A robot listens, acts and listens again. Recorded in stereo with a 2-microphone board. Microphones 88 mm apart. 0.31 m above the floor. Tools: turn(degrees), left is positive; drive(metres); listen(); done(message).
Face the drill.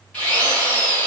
turn(degrees=15)
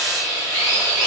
done("Facing the drill, 1 to 2 m away.")